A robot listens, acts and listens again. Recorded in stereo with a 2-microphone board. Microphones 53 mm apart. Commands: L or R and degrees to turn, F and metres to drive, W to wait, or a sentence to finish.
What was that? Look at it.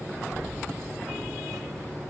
R90
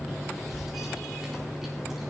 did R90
Found it: keys jangling, straight ahead.